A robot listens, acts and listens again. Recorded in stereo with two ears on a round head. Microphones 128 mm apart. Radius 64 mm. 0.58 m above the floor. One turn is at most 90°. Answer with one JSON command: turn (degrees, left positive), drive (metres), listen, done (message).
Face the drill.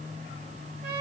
{"listen": true}
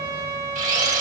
{"turn": -55}
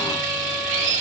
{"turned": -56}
{"turn": -65}
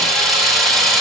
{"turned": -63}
{"done": "Facing the drill."}